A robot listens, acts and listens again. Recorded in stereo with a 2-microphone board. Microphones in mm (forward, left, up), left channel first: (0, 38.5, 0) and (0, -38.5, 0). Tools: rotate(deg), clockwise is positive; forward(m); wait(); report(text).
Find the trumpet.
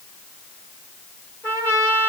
rotate(-30)
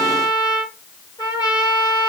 rotate(-115)
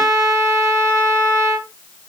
rotate(30)
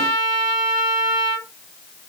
rotate(-10)
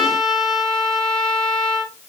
report("Found it: a trumpet, straight ahead.")